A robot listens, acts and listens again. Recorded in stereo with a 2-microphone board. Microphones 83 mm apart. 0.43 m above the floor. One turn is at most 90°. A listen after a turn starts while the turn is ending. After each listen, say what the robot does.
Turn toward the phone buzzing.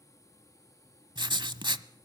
Keep listening.
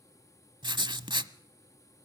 Keep listening.
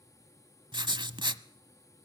I can't make out a phone buzzing to turn to.